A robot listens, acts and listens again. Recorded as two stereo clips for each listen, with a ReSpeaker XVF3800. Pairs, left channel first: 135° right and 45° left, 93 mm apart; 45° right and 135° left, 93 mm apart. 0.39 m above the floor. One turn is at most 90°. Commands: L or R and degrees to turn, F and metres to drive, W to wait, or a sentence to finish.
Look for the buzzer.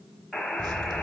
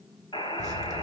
R45
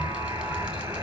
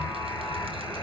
Found it: a buzzer, straight ahead.